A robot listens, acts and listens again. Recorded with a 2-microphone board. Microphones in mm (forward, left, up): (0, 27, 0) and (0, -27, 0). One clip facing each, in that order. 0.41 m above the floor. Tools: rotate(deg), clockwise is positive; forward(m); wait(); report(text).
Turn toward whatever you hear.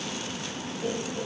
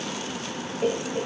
rotate(60)
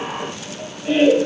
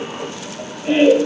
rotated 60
rotate(25)
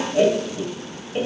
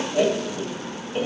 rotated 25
report("Facing the laughter.")